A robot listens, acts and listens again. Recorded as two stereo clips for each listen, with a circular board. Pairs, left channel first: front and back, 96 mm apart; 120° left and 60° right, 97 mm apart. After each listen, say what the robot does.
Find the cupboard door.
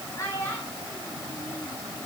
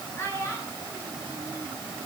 Keep listening.
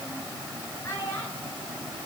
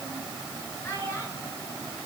Keep listening.
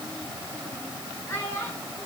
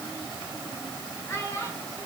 I can't make out a cupboard door, only a child speaking.